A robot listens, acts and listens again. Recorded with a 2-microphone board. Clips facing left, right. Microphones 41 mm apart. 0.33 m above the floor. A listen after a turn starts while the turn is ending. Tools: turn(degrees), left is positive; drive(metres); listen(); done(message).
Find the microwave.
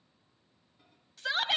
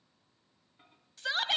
turn(degrees=-40)
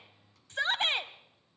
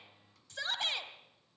listen()
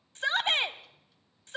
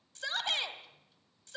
listen()
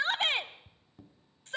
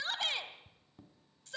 done("Found it: a microwave, straight ahead.")